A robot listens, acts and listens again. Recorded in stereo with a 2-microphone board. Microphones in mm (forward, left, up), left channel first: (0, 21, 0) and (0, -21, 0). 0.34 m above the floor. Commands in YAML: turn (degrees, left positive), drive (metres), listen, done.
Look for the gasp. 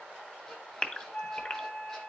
turn: 30
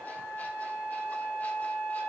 listen: true
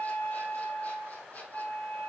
done: "I heard a gasp, but can't make it out now. It was about straight ahead or 120° left."